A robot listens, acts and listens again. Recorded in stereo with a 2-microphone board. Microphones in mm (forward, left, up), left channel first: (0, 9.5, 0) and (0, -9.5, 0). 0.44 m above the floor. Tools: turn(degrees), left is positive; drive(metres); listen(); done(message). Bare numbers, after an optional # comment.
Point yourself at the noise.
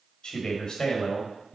# The man speaking: about 40° left or 140° left.
turn(40)
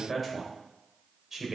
# So it is at 25° right.
turn(-25)
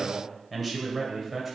# The man speaking is now 10° right.
turn(-10)
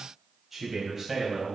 # The man speaking is now 15° right.
turn(-15)
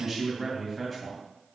done("Found it: a man speaking, straight ahead, 2 to 4 m away.")